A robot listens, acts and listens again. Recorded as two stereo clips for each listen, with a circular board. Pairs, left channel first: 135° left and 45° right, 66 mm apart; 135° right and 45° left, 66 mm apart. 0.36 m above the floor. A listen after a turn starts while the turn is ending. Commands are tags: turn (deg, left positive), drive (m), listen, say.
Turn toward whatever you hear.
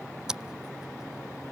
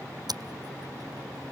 <turn deg="35"/>
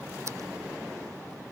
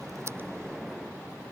<listen/>
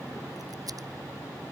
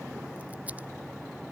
<listen/>
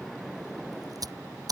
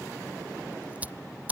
<turn deg="-25"/>
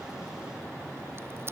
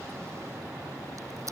<listen/>
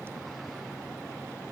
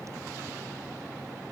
<listen/>
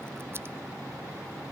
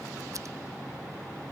<say>Facing where the scissors came from. I can't hear it now.</say>